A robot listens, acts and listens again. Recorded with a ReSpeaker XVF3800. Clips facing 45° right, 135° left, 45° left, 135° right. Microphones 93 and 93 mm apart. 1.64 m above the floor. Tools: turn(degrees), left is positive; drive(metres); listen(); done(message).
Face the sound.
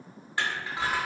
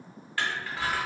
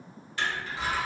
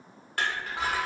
turn(degrees=-110)
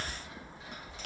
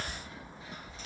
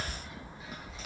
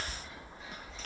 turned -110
turn(degrees=-35)
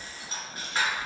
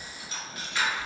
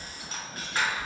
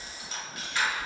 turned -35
done("Facing the crushing, under 1 m away.")